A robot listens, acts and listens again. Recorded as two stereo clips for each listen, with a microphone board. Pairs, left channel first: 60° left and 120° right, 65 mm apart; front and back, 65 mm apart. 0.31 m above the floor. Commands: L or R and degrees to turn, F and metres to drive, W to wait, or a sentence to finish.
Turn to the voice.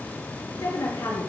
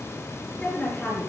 L75
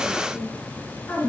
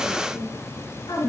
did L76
Found it: a woman speaking, straight ahead, over 4 m away.